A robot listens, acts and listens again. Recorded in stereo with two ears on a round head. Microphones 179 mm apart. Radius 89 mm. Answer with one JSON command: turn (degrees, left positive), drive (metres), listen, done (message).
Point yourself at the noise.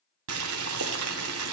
{"turn": -90}
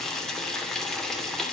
{"done": "Found it: boiling, straight ahead."}